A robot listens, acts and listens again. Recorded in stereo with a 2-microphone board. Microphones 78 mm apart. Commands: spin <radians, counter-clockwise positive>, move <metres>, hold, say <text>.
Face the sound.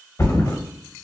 spin 0.52
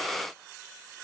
hold
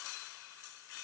say I heard a thud, but can't make it out now. It was about straight ahead or 120° left.